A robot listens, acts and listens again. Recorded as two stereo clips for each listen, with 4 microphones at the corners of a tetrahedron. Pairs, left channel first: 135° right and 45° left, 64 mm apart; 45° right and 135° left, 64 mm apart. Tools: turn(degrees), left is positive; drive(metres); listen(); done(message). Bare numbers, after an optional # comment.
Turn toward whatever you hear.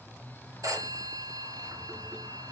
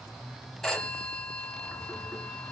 # The phone ringing: 35° left.
turn(35)
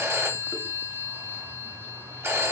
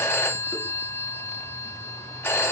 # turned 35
done("Found it: a phone ringing, straight ahead, 1 to 2 m away.")